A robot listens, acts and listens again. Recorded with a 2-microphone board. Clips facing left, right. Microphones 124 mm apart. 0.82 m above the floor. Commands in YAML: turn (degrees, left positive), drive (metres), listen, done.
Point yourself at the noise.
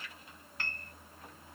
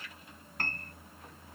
turn: -45
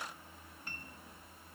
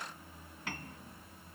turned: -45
turn: -90
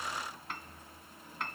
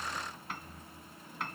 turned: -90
done: "Facing the piano."